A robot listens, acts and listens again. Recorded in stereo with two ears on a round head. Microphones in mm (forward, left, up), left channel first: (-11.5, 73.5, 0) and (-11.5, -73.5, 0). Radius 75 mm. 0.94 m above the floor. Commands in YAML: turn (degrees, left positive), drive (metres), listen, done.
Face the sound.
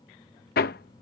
turn: 65
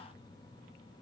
listen: true
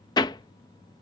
turn: 25
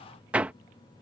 turn: -10
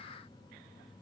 listen: true
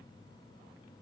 listen: true
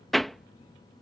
done: "Found it: hammering, straight ahead."